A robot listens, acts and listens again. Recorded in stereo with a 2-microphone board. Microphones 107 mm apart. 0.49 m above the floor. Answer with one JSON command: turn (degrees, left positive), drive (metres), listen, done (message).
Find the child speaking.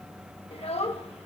{"turn": 65}
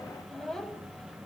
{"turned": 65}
{"done": "Found it: a child speaking, straight ahead."}